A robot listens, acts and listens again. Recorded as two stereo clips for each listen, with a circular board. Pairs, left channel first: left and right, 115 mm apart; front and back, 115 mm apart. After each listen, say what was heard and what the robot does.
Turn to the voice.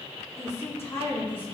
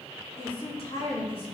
The woman speaking: 20° left. Turn 20° left.
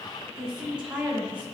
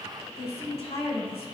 The woman speaking is now 15° right. Turn 15° right.
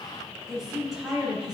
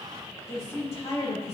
Facing the woman speaking, over 4 m away.